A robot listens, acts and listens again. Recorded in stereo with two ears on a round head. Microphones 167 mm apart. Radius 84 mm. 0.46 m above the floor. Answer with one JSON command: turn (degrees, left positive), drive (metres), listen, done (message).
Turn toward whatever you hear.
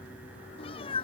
{"turn": 30}
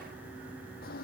{"listen": true}
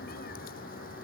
{"listen": true}
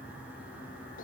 {"done": "I heard a cat meowing, but can't make it out now. It was about straight ahead or 120° left."}